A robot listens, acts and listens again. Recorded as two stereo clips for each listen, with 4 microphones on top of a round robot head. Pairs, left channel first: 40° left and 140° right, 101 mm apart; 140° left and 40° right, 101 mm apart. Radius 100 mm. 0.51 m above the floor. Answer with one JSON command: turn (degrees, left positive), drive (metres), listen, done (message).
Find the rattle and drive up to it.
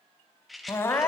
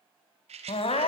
{"turn": -50}
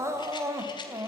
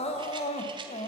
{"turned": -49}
{"listen": true}
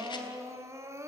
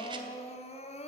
{"listen": true}
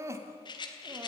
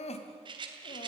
{"drive": 1.0}
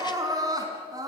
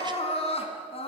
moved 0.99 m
{"listen": true}
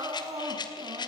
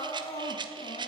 {"drive": 1.0}
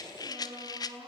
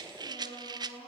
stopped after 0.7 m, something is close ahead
{"done": "I am next to the rattle."}